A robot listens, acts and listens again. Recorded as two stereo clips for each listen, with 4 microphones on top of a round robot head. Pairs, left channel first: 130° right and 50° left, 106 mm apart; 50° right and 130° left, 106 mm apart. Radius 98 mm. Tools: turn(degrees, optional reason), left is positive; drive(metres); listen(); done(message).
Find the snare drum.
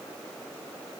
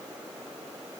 listen()
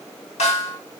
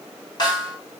turn(degrees=-100, reason="The snare drum: 100° right.")
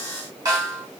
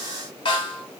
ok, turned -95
done("Facing the snare drum, 1 to 2 m away.")